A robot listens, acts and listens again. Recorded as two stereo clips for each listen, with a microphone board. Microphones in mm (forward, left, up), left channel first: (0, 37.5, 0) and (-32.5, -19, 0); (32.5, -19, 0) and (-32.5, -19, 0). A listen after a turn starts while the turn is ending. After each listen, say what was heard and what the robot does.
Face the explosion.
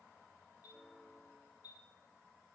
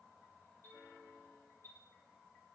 Keep listening.
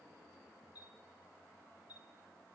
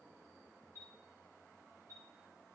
Keep listening.
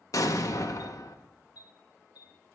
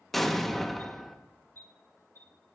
The explosion: 85° left. Turn 85° left.
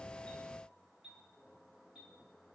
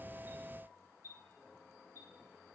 Facing where the explosion came from. I can't hear it now.